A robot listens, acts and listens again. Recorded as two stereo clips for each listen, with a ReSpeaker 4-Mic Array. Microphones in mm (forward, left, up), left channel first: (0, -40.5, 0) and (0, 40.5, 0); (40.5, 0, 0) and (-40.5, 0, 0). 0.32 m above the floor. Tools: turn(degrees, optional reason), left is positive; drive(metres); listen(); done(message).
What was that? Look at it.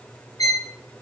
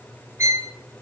turn(degrees=-130, reason="The violin: 130° right.")
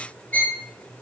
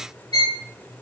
turn(degrees=-25, reason="The violin is now 25° right.")
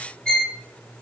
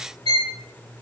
turn(degrees=-15, reason="The violin is now 15° right.")
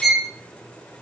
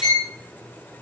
done("Facing the violin.")